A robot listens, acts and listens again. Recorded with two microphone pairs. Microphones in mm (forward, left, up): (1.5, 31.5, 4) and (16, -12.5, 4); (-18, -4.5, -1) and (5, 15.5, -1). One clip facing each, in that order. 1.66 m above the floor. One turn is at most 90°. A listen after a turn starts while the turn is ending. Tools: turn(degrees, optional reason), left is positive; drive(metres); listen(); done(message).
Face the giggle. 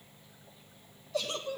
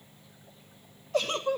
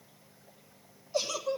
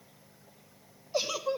turn(degrees=-30, reason="The giggle: 30° right.")
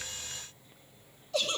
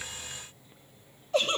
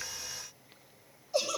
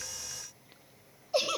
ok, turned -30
turn(degrees=-15, reason="The giggle is now 15° right.")
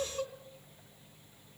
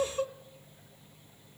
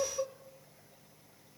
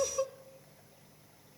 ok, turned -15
done("Facing the giggle.")